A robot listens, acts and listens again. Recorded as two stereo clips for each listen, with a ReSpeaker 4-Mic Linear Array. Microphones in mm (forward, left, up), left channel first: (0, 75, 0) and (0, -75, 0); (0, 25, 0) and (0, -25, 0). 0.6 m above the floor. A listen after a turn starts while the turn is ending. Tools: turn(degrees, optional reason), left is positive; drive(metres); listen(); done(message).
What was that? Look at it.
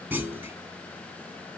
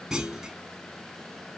turn(degrees=-30)
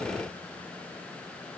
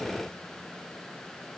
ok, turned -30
listen()
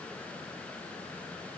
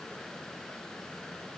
done("I heard a clunk, but can't make it out now. It was about 15° left or 135° right.")